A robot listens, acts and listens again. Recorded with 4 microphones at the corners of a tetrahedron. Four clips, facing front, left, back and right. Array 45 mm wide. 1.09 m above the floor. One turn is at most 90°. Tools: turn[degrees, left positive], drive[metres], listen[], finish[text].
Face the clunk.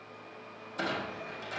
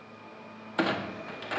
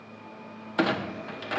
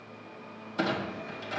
Thought: The clunk: 150° left.
Action: turn[90]
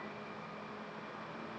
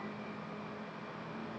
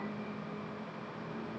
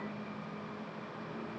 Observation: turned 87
Thought: Nothing new. It was at 65° left.
Action: turn[65]
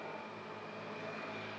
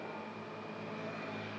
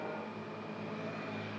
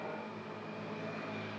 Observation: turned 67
Action: finish[Facing where the clunk came from. I can't hear it now.]